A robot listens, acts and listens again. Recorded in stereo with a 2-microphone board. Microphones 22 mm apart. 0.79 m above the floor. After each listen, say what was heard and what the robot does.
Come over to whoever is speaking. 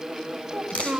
The child speaking: about 65° right or 115° right. Turn 65° right.
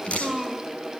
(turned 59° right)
So it is at 10° right. Turn 10° right.
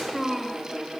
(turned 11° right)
Drive 1.0 m forward.
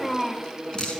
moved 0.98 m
Drive 1.0 m forward.
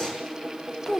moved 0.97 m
The child speaking is now 15° left. Turn 15° left.
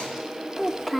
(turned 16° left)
Drive 1.0 m forward.
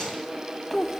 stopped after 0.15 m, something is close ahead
Arrived at the child speaking, straight ahead.